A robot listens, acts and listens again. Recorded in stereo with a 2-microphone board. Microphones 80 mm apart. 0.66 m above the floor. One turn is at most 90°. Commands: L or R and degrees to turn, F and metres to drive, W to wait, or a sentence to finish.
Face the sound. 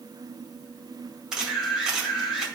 R30
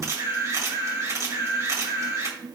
R90
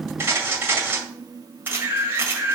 R30
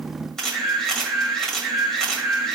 Found it: a camera shutter, straight ahead, 2 to 4 m away.